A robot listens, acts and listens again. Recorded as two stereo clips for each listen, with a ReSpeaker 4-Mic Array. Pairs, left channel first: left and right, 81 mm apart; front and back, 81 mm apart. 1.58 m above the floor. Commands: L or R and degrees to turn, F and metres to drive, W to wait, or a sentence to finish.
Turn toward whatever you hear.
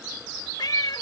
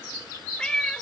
L75
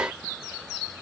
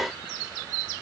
W
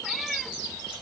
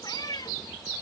Facing the cat meowing.